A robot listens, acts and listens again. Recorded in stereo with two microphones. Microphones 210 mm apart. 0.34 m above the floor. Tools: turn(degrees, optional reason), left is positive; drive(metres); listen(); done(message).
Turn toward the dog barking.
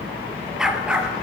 turn(degrees=-30)
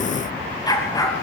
turn(degrees=15, reason="So it is at 15° left.")
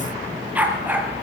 turn(degrees=-10, reason="The dog barking is now 10° right.")
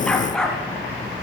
done("Facing the dog barking, 2 to 4 m away.")